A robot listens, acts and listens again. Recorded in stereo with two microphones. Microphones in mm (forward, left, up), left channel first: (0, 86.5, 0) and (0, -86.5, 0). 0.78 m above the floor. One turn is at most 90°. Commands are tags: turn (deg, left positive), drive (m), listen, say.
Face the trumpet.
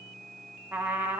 <turn deg="-30"/>
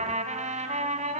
<turn deg="-90"/>
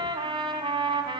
<turn deg="-25"/>
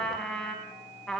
<say>Found it: a trumpet, straight ahead, 2 to 4 m away.</say>